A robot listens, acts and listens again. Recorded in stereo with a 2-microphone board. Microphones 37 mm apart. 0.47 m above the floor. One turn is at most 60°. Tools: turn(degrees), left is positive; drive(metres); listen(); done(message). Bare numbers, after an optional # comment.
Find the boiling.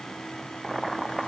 turn(30)
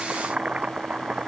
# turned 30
# So it is at 30° right.
turn(-30)
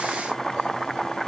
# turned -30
done("Found it: boiling, straight ahead.")